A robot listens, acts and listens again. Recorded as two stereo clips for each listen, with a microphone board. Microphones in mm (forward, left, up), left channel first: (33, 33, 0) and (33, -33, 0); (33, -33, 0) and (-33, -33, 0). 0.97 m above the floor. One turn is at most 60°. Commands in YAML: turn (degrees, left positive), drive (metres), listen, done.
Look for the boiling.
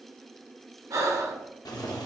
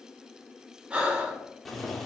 turn: 60
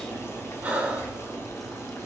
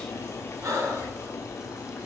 turn: 40
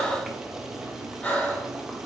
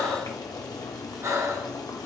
turn: -10
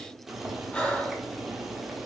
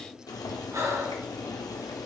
done: "Found it: boiling, straight ahead."